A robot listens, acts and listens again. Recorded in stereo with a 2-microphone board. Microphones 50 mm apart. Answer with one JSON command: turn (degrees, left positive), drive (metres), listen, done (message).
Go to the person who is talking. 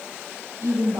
{"turn": -90}
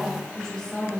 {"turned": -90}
{"turn": 15}
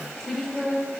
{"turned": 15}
{"drive": 1.0}
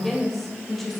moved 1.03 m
{"drive": 1.0}
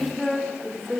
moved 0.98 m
{"drive": 1.0}
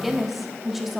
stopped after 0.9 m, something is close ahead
{"done": "I am next to the woman speaking."}